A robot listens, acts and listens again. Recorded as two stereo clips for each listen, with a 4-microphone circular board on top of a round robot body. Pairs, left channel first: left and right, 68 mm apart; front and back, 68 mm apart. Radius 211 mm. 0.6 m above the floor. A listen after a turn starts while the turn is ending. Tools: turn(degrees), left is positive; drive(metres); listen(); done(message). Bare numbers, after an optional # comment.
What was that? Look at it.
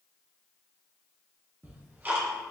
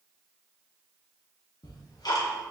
# The ticking: 25° right.
turn(-25)
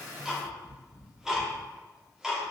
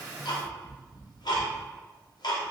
# The ticking is now 10° right.
turn(-10)
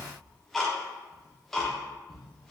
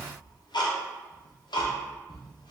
done("Found it: ticking, straight ahead.")